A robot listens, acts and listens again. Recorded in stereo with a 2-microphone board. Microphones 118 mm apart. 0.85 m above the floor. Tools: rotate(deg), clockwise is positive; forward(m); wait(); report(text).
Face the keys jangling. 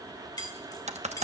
rotate(-30)
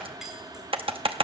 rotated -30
report("Facing the keys jangling, 2 to 4 m away.")